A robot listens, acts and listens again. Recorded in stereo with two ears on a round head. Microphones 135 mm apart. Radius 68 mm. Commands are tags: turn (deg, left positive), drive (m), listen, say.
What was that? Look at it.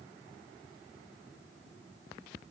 <listen/>
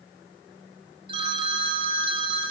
<turn deg="-30"/>
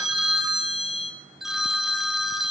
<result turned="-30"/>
<say>Found it: a phone ringing, straight ahead.</say>